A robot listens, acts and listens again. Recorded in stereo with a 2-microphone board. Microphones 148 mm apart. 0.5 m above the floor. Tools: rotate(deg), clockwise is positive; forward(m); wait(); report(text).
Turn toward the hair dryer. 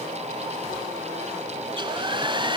rotate(35)
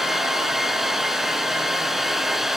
report("Facing the hair dryer, 1 to 2 m away.")